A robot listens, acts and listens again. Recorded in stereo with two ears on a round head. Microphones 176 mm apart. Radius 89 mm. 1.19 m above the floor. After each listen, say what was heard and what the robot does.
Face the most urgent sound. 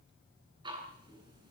Keep listening.
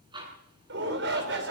The shout: about 65° right or 115° right. Turn 65° right.
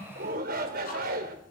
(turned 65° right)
So it is at 50° right. Turn 50° right.
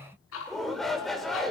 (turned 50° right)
Facing the shout, over 4 m away.